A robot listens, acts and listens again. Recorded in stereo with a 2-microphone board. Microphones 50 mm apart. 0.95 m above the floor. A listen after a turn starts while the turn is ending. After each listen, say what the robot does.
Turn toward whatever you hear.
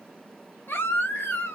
Turn 45° left.
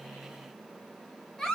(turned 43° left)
Facing the baby crying.